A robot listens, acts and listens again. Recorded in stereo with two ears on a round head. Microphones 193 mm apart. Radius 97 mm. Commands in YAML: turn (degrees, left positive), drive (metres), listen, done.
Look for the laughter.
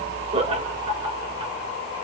turn: -25
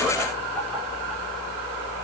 done: "Facing the laughter."